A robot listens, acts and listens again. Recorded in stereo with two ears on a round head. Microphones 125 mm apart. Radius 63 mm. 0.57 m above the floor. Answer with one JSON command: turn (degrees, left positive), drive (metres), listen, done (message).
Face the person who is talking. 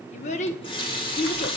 {"turn": 50}
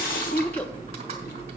{"listen": true}
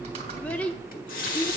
{"turn": 10}
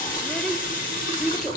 {"done": "Found it: a child speaking, straight ahead, under 1 m away."}